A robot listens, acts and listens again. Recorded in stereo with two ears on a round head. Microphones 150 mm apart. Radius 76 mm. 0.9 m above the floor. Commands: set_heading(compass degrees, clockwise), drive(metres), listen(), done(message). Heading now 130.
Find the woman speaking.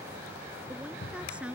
set_heading(160)
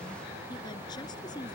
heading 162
set_heading(137)
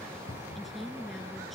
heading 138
done("Found it: a woman speaking, straight ahead.")